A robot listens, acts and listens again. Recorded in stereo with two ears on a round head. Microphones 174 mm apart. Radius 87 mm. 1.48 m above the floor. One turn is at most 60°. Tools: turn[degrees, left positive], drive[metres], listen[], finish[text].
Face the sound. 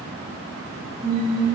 Action: turn[-30]
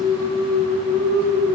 Action: turn[-30]
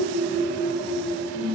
Thought: So it is at 155° right.
Action: turn[-60]
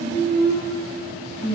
Thought: The singing is now 115° right.
Action: turn[-60]
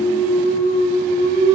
Thought: The singing is now 60° right.
Action: turn[-60]
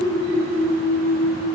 Thought: The singing is now 20° right.
Action: turn[-20]
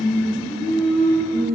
Action: finish[Found it: singing, straight ahead.]